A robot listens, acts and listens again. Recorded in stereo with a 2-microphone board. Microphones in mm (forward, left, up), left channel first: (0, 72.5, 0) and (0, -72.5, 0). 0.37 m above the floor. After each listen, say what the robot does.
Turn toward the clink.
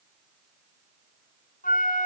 Keep listening.
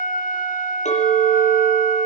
Turn 55° left.
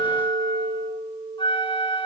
Found it: a clink, straight ahead.